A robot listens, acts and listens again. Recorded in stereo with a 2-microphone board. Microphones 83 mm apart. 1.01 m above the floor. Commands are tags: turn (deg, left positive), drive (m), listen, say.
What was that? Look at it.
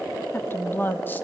<turn deg="25"/>
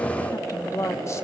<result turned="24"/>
<turn deg="40"/>
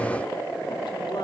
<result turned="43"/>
<listen/>
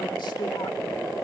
<listen/>
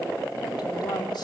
<say>I heard a woman speaking, but can't make it out now. It was about 5° right or 100° left.</say>